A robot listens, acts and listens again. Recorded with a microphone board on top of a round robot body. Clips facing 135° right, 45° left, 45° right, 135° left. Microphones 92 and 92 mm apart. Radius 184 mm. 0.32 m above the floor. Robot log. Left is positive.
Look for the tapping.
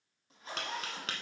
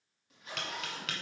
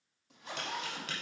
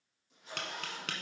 note: The tapping: 170° left.
cmd yaw +170
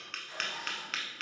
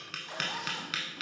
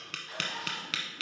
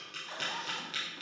note: The tapping is now 40° right.
cmd yaw -40
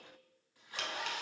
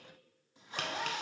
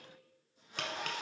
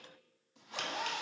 cmd idle
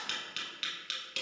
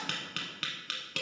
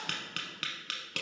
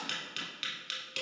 end: Facing the tapping, under 1 m away.